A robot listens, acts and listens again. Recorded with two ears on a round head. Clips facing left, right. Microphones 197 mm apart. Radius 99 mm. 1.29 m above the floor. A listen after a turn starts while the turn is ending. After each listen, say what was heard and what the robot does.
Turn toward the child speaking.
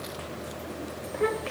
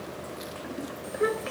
Turn 30° right.
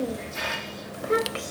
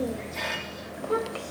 So it is at 25° left. Turn 25° left.
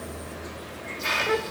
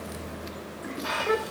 Facing the child speaking.